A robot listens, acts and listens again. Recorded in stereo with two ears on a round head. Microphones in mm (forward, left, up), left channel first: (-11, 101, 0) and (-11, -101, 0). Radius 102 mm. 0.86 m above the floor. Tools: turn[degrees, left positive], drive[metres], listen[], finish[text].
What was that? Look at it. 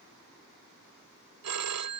Action: turn[-90]
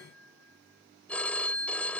Action: finish[Facing the phone ringing.]